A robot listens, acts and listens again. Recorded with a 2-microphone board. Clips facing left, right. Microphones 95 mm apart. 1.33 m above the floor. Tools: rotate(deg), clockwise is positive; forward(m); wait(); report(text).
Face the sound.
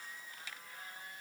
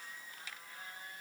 wait()
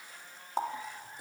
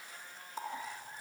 rotate(-75)
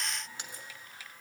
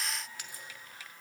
rotate(-25)
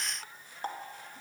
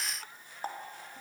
report("Found it: a running tap, straight ahead, 1 to 2 m away.")